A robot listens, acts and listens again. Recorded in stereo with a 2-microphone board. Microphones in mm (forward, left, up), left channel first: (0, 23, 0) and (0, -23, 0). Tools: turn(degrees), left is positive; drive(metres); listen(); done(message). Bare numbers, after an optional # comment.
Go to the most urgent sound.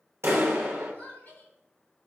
# The crying: about 45° left or 135° left.
turn(45)
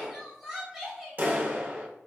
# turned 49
drive(1.0)
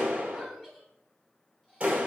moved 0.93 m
listen()
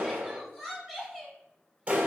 # The crying is now 10° left.
turn(10)
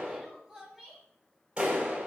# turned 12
drive(1.0)
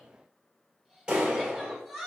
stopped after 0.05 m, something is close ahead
done("Arrived at the crying, straight ahead.")